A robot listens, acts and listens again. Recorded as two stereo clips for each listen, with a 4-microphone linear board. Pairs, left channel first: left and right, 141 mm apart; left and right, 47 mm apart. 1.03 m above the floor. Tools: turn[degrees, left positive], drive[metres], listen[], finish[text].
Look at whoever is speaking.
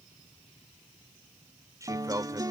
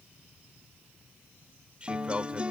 Thought: The man speaking: about 25° right or 155° right.
Action: turn[-25]
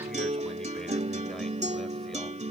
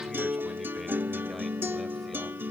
Action: listen[]
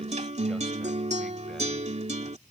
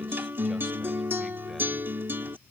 Action: listen[]
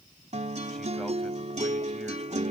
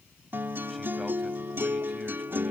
Action: finish[I heard a man speaking, but can't make it out now. It was about straight ahead or 130° right.]